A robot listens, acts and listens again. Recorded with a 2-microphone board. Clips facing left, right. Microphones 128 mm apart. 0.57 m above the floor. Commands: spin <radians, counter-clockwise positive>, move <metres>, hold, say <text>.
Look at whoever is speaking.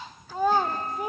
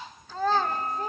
spin 0.26
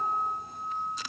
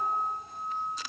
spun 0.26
hold
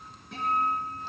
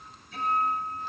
hold
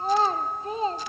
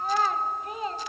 spin 2.62
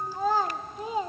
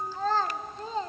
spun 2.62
spin 0.26
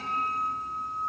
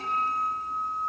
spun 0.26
hold
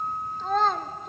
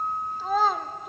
say Facing the child speaking.